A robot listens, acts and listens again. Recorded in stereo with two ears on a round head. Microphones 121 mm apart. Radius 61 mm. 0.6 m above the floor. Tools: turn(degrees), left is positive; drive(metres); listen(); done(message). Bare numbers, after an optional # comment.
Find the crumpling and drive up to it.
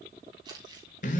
# The crumpling: about 35° right or 145° right.
turn(-35)
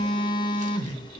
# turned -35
listen()
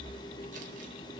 listen()
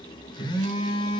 done("I heard crumpling, but can't make it out now. It was about straight ahead or 110° right. I did not reach it.")